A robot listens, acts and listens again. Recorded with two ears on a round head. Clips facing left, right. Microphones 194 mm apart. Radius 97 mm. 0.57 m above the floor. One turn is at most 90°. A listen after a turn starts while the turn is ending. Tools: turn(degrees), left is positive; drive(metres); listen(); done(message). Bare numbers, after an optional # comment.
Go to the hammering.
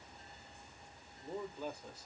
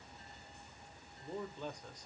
listen()
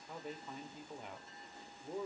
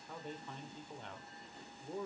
listen()
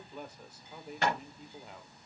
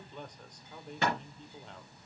# The hammering: about 75° right or 105° right.
turn(-75)
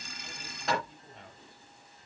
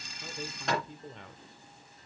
drive(1.0)
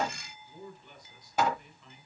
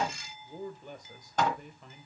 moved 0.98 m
# The hammering is now 10° left.
turn(10)
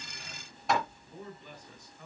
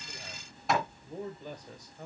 drive(1.0)
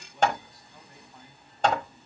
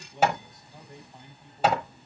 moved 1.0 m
drive(1.0)
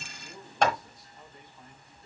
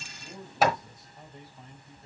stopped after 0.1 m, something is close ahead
done("Arrived at the hammering, straight ahead.")